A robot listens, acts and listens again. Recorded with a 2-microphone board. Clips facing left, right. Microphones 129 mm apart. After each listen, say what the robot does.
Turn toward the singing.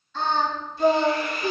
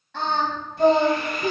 Turn 70° right.
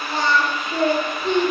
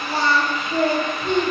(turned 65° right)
Facing the singing.